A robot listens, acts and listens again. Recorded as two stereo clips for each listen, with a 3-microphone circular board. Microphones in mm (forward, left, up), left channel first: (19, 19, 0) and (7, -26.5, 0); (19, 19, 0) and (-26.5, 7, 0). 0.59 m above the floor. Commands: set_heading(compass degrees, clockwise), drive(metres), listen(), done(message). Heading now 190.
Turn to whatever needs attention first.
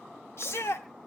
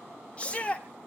set_heading(115)
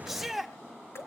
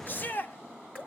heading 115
set_heading(135)
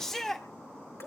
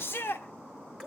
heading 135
done("Found it: a shout, straight ahead.")